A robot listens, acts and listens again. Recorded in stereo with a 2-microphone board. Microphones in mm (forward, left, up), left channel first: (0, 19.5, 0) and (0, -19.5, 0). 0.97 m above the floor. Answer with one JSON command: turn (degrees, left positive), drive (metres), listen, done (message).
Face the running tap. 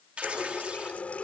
{"turn": 35}
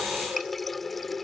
{"done": "Facing the running tap."}